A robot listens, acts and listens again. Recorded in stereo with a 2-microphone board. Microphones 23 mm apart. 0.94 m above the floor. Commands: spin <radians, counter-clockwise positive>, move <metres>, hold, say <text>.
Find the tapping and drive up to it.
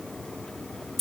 hold
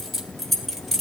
hold
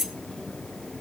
say I can't make out tapping to turn to.